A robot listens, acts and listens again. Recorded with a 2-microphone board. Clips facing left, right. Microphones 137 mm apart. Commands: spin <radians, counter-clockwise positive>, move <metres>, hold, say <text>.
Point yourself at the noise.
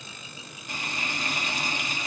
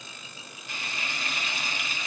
spin 0.79
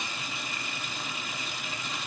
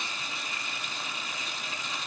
say Found it: frying, straight ahead.